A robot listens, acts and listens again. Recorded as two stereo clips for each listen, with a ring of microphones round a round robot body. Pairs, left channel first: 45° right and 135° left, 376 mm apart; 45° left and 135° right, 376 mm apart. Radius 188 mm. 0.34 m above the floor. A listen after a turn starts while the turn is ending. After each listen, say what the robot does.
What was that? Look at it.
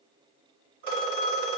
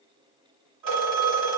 Turn 170° right.
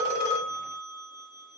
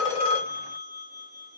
Turn 35° left.
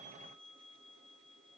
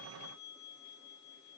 Keep listening.
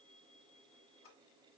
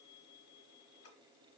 Keep listening.
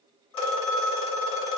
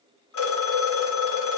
Turn 10° right.
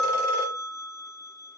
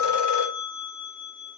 Found it: a phone ringing, straight ahead.